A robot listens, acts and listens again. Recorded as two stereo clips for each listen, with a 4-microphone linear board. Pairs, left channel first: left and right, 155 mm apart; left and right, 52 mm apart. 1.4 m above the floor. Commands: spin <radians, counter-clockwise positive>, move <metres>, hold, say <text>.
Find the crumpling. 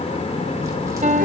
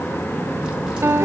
hold
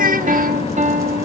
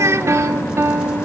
hold
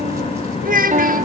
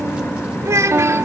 say I can't make out crumpling, only a piano and a child speaking.